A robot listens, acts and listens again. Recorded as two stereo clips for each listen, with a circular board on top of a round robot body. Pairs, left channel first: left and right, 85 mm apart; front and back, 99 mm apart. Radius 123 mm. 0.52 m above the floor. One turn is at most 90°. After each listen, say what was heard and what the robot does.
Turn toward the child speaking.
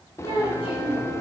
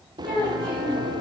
The child speaking: 85° left. Turn 85° left.
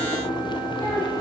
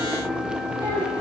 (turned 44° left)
Nothing new. It was at 40° left. Turn 40° left.
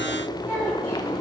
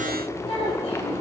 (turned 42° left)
Keep listening.
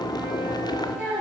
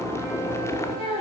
The child speaking is now 15° right. Turn 15° right.
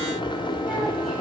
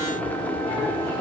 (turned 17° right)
Keep listening.
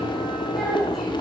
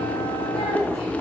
Keep listening.
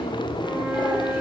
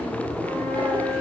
I heard a child speaking from this way, but can't make it out now.